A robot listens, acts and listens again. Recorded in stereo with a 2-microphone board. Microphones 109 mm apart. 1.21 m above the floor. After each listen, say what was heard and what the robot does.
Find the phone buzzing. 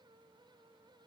Keep listening.
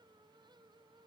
Keep listening.
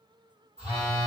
Turn 90° right.
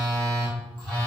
Facing the phone buzzing.